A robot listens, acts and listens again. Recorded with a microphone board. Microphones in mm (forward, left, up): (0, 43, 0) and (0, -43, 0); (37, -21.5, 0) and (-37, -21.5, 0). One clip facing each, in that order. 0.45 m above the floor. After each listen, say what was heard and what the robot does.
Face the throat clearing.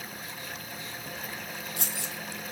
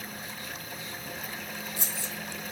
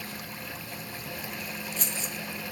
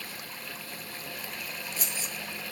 Keep listening.
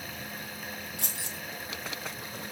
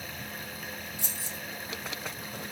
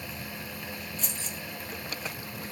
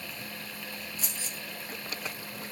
Keep listening.
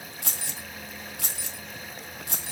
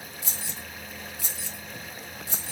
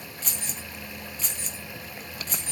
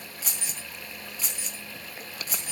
I can't make out throat clearing to turn to.